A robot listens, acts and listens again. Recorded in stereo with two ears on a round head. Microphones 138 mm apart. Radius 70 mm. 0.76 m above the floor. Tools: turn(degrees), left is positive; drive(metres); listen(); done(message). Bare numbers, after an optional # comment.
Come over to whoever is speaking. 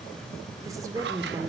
# The woman speaking: about 25° right or 155° right.
turn(-25)
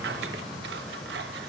listen()
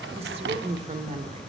# So it is at 135° right.
turn(-135)
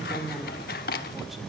drive(1.0)
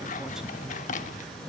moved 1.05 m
listen()
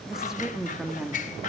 drive(1.0)
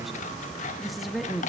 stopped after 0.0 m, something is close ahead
done("Arrived at the woman speaking, straight ahead.")